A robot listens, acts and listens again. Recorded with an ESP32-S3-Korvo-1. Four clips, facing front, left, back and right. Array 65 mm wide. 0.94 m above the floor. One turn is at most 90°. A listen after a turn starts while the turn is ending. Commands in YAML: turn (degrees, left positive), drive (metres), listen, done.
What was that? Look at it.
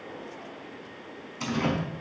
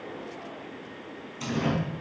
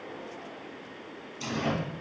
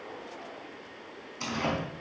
turn: -20
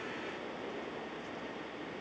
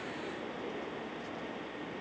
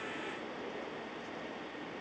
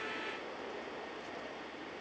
done: "Facing where the door slam came from. I can't hear it now."